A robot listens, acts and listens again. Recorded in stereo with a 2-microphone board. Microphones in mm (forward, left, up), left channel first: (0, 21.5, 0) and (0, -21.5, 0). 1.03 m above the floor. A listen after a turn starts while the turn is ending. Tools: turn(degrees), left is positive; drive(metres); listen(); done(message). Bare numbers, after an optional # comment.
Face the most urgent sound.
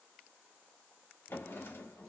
listen()
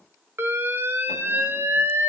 # The alarm: about 65° right or 115° right.
turn(-65)
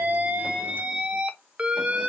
# So it is at 30° right.
turn(-30)
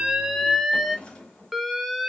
done("Found it: an alarm, straight ahead.")